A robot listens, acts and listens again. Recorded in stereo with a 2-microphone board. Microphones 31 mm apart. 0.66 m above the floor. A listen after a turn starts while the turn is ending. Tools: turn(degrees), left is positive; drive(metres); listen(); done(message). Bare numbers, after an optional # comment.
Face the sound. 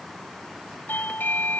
turn(90)
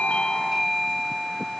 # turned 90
done("Found it: a doorbell, straight ahead.")